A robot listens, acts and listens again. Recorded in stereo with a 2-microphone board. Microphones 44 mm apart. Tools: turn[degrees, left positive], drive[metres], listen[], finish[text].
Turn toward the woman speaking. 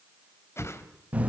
Action: listen[]
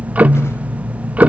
Action: listen[]
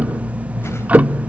Action: finish[I can't make out a woman speaking to turn to.]